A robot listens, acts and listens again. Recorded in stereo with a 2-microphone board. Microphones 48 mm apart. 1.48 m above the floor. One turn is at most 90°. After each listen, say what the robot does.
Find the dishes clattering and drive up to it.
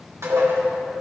Turn 90° right.
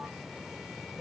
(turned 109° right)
Turn 30° left.
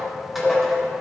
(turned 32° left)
Drive 1.0 m forward.
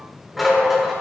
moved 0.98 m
Drive 1.0 m forward.
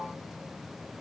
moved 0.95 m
Keep listening.
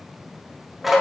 Drive 1.0 m forward.
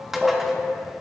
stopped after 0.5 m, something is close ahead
Turn 10° right.
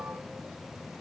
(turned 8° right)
Keep listening.
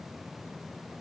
Keep listening.
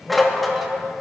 I am next to the dishes clattering.